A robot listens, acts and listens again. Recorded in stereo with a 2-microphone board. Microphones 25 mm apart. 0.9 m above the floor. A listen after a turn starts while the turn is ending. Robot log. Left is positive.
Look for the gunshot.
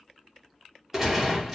cmd yaw -30
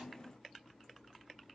cmd idle
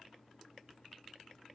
end: I heard a gunshot, but can't make it out now. It was about 15° left or 135° right.